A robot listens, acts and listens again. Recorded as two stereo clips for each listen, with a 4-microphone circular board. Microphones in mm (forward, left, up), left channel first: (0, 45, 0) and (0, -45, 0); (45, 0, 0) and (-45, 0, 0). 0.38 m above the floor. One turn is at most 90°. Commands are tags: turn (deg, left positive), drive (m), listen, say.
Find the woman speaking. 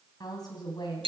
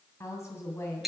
<turn deg="55"/>
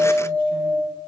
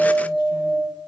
<listen/>
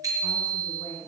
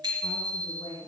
<turn deg="25"/>
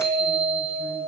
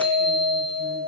<listen/>
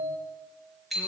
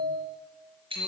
<listen/>
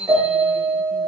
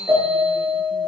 <say>Facing where the woman speaking came from. I can't hear it now.</say>